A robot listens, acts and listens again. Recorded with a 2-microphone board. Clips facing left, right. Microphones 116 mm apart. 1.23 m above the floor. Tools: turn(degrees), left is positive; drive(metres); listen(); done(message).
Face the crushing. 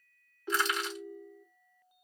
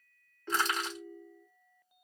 turn(degrees=-45)
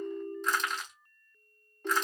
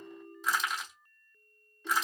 done("Facing the crushing.")